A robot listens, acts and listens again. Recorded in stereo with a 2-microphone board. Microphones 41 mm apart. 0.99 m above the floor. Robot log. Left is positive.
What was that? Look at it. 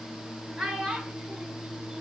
cmd yaw -30
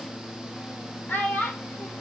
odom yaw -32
note: So it is at 45° left.
cmd yaw +45
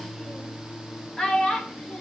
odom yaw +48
note: The child speaking is now 20° left.
cmd yaw +20
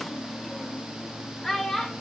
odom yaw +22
note: The child speaking is now 10° left.
cmd yaw +10
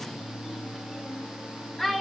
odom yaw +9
end: Facing the child speaking, 2 to 4 m away.